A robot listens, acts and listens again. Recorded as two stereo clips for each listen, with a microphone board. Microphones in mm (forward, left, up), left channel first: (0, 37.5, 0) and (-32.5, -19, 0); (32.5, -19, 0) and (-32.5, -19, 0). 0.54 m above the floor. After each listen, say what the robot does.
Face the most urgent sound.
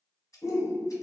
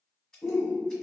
Turn 50° left.
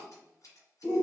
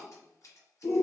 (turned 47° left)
Found it: a shout, straight ahead, 1 to 2 m away.